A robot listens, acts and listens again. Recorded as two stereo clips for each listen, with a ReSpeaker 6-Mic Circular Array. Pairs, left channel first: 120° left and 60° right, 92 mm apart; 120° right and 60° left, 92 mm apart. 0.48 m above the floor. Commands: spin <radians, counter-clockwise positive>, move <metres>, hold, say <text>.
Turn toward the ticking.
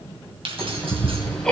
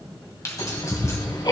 spin -2.79
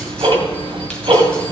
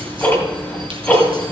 spin -0.87
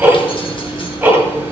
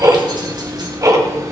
say Facing the ticking.